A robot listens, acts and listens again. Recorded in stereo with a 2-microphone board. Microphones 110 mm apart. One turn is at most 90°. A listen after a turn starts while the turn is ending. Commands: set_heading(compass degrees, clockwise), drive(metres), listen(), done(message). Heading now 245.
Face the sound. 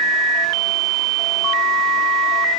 listen()
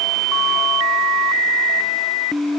listen()
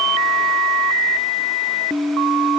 done("I can't make out anything.")